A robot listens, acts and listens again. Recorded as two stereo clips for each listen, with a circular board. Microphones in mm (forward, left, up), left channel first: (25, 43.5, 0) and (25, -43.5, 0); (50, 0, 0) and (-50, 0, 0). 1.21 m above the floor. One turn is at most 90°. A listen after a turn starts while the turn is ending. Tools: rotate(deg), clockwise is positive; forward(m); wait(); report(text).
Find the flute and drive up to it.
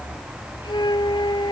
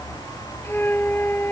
rotate(-65)
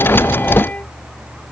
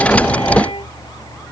rotate(-20)
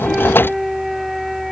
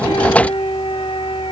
forward(1.0)
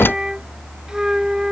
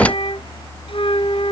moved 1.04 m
rotate(10)
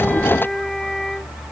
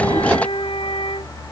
forward(1.0)
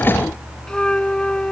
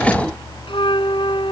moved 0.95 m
rotate(-10)
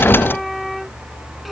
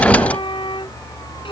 forward(1.0)
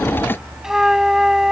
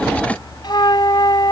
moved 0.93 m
rotate(10)
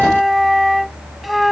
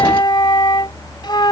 forward(1.0)
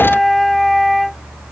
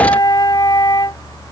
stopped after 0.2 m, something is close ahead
report("I am next to the flute.")